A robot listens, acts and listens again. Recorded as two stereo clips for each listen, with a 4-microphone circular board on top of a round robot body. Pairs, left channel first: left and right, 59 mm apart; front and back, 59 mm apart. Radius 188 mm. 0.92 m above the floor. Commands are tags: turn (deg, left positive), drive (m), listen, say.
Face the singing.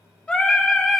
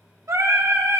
<turn deg="175"/>
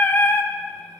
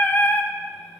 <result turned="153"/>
<turn deg="50"/>
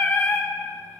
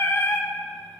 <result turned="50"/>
<turn deg="35"/>
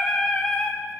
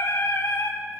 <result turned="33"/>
<turn deg="25"/>
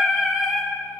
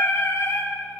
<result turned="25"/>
<say>Facing the singing, 2 to 4 m away.</say>